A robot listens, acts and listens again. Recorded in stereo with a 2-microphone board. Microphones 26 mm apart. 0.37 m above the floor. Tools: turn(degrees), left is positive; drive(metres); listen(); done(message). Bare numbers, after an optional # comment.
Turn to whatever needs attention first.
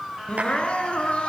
# The crying: about 45° left or 135° left.
turn(45)
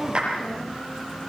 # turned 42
done("Found it: crying, straight ahead, 2 to 4 m away.")